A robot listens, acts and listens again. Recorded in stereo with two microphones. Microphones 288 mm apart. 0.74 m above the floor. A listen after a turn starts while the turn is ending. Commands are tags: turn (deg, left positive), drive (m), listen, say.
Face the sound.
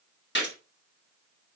<turn deg="40"/>
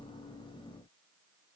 <listen/>
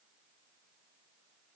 <say>I heard a gunshot, but can't make it out now. It was about straight ahead or 100° left.</say>